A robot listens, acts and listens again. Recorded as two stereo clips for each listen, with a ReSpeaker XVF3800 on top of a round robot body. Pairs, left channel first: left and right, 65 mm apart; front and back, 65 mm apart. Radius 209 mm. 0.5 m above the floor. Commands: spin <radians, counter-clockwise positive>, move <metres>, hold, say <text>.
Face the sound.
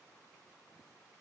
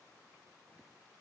hold
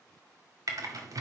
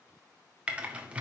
spin -1.92
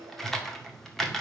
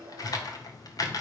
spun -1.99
say Facing the typing on a keyboard.